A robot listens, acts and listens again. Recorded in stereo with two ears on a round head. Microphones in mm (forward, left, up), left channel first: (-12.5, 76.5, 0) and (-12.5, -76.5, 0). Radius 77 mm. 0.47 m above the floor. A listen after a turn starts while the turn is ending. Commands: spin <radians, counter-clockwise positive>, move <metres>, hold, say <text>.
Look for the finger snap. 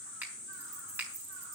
spin -0.52
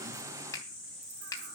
spin 0.35
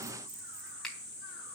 say Found it: a finger snap, straight ahead, 2 to 4 m away.